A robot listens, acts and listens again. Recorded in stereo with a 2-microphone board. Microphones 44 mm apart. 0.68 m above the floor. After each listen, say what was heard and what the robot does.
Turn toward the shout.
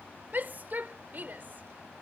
The shout: about 50° right or 130° right. Turn 50° right.
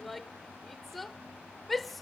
Found it: a shout, straight ahead.